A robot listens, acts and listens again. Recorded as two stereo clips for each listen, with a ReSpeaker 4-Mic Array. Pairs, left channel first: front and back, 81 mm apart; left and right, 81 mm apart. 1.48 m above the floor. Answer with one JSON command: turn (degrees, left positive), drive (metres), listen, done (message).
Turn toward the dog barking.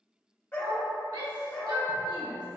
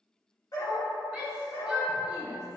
{"turn": 80}
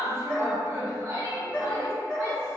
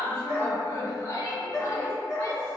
{"turn": 80}
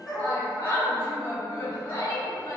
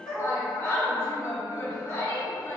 {"done": "Found it: a dog barking, straight ahead, 1 to 2 m away."}